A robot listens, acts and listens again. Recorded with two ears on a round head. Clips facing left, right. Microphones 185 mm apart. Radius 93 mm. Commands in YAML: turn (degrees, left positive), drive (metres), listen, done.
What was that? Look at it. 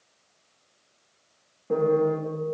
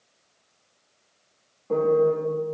turn: 15
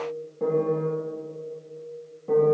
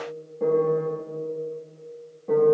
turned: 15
done: "Found it: a piano, straight ahead."